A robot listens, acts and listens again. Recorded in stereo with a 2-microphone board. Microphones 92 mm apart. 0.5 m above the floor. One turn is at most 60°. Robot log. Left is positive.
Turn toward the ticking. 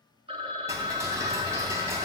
note: The ticking: about 35° right or 145° right.
cmd yaw -35
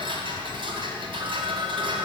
note: So it is at 110° right.
cmd yaw -60
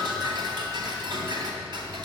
note: The ticking is now 60° right.
cmd yaw -60
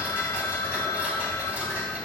note: The ticking is now 15° right.
cmd yaw -15
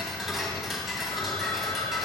end: Facing the ticking.